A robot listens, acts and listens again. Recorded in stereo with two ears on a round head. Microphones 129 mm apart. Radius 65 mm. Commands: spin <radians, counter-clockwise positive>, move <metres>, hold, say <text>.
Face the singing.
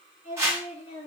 spin -0.52
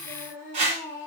spin 0.35
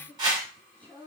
spin 0.17
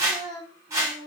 spin 0.17
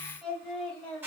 spin 0.17
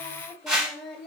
say Found it: singing, straight ahead, 1 to 2 m away.